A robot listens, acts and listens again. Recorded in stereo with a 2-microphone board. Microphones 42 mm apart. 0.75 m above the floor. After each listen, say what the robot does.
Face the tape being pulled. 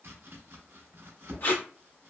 Turn 55° left.
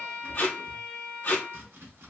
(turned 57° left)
Turn 55° left.
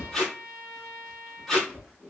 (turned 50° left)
Found it: tape being pulled, straight ahead, 1 to 2 m away.